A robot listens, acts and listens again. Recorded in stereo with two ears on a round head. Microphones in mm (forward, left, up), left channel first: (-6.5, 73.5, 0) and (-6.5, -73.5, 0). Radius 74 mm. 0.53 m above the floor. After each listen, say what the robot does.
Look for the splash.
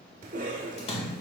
Turn 40° left.
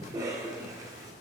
Keep listening.
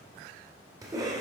I heard a splash, but can't make it out now. It was about straight ahead or 100° left.